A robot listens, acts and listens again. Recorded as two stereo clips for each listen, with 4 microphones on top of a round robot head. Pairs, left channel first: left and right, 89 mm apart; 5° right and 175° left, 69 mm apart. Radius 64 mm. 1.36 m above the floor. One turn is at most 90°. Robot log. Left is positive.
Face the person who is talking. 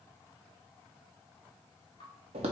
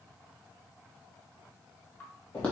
cmd idle
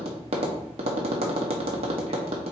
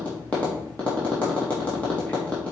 cmd idle
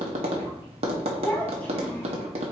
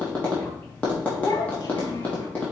note: The child speaking: 10° left.
cmd yaw +10
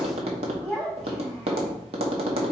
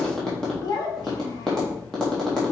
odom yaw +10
end: Found it: a child speaking, straight ahead.